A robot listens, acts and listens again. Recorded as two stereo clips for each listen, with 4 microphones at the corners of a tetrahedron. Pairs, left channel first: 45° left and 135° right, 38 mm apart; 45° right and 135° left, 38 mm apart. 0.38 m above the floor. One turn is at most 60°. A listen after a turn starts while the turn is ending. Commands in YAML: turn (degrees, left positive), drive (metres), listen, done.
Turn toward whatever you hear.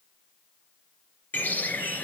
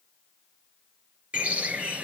turn: 60
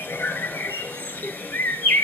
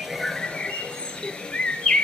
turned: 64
turn: 20
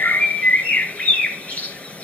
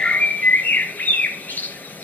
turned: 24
done: "Facing the bird."